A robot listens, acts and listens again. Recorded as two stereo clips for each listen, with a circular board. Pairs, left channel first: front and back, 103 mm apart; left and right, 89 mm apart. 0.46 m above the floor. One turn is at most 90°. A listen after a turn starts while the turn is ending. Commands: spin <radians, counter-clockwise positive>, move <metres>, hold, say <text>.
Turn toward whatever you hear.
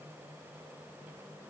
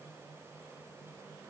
hold
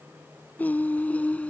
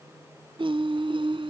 spin -1.31
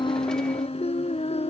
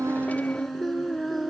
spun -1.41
say Found it: singing, straight ahead.